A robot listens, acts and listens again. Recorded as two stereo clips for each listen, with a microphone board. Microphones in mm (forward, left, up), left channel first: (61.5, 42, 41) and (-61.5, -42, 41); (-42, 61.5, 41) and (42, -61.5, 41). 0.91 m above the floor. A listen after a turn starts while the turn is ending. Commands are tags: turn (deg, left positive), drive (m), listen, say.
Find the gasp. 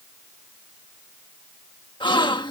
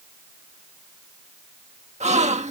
<turn deg="-20"/>
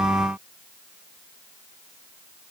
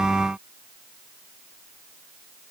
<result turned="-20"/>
<say>Facing where the gasp came from. I can't hear it now.</say>